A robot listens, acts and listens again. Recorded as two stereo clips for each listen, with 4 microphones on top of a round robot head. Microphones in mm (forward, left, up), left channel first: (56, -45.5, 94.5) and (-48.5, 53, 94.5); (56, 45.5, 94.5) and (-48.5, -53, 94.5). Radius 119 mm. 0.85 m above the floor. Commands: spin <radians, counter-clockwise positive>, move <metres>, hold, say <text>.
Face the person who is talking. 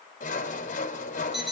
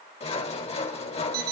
hold
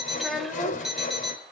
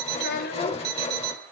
spin 0.79
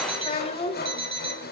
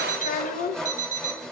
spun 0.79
spin 0.17
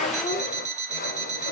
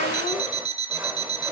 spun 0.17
hold
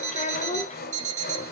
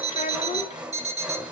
say Facing the child speaking, 2 to 4 m away.